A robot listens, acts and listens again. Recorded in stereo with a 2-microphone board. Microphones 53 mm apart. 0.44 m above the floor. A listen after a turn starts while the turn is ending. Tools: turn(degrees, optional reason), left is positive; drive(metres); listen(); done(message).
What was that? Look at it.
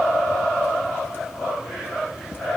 listen()
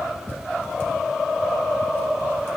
listen()
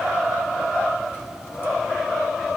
done("I can't make out anything.")